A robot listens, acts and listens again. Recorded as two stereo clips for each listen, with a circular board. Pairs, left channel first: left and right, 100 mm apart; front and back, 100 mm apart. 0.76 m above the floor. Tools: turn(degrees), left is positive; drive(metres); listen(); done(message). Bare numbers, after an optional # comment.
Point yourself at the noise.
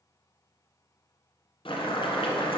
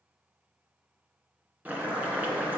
# The boiling: 105° left.
turn(105)
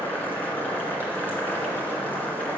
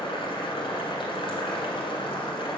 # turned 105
# The boiling is now 20° left.
turn(20)
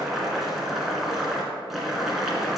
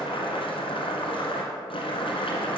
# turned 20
done("Found it: boiling, straight ahead, 1 to 2 m away.")